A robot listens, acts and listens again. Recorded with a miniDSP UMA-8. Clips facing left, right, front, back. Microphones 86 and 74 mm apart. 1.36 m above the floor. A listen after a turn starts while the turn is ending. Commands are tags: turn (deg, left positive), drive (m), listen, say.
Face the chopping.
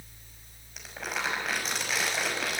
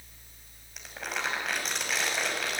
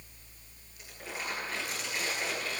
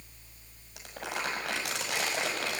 <listen/>
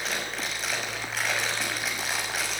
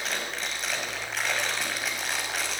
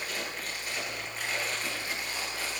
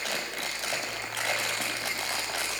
<listen/>
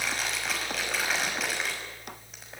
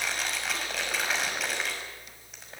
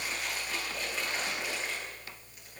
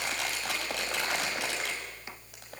<say>I can't make out chopping, only crumpling.</say>